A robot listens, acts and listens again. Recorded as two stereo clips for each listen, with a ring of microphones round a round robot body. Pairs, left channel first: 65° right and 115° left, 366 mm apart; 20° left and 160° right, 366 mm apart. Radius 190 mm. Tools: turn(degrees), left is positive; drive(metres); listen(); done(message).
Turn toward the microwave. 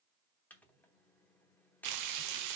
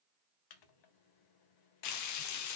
turn(degrees=20)
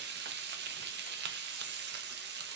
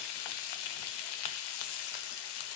listen()
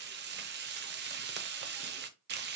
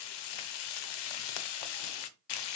listen()
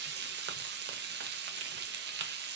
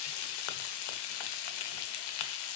done("I heard a microwave from this way, but can't make it out now.")